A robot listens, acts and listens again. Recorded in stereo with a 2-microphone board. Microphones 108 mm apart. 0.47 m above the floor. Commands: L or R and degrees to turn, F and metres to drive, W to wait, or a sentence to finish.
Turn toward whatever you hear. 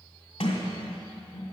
L90
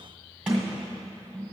R10
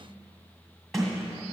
Found it: a sliding door, straight ahead.